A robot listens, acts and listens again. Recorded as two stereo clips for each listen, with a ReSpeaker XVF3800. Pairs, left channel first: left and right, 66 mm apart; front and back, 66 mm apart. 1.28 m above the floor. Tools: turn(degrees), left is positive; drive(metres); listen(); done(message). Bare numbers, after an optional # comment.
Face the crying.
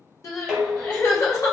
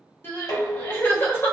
# The crying: 55° left.
turn(55)
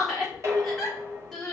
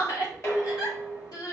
done("Found it: crying, straight ahead.")